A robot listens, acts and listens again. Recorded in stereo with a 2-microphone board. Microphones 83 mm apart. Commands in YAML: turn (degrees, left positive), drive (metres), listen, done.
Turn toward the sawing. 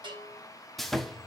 turn: 30
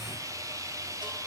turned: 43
turn: -40
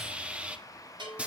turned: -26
turn: -15
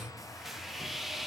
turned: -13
done: "Facing the sawing, under 1 m away."